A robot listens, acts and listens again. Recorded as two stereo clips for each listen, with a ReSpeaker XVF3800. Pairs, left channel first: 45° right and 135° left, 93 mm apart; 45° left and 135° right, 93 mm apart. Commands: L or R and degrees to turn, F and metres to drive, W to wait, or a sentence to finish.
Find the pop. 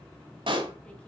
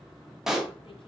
L140
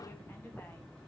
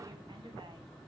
Facing where the pop came from. I can't hear it now.